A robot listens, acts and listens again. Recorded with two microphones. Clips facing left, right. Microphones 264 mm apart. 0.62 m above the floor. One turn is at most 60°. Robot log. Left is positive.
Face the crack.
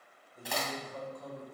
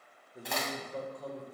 cmd yaw +30
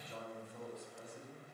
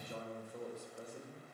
cmd idle
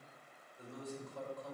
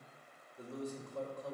end: I heard a crack, but can't make it out now. It was about 30° right or 150° left.